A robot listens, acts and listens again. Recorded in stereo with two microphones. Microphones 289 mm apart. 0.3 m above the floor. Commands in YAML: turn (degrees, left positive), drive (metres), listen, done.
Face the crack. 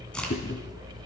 turn: 30
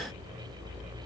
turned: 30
listen: true
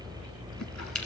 done: "I heard a crack, but can't make it out now. It was about 25° right or 145° left."